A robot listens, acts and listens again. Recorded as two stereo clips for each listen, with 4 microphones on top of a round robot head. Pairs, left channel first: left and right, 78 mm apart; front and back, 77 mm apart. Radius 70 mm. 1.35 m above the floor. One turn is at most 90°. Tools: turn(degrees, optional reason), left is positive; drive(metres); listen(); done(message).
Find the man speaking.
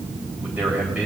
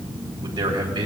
turn(degrees=-90, reason="The man speaking: 165° right.")
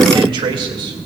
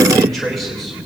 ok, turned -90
turn(degrees=-90, reason="The man speaking is now 90° right.")
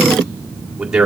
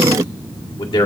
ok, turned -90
turn(degrees=-10, reason="The man speaking is now 10° right.")
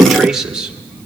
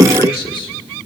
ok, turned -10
turn(degrees=-10, reason="The man speaking is now 10° right.")
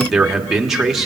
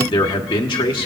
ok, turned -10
done("Facing the man speaking, 1 to 2 m away.")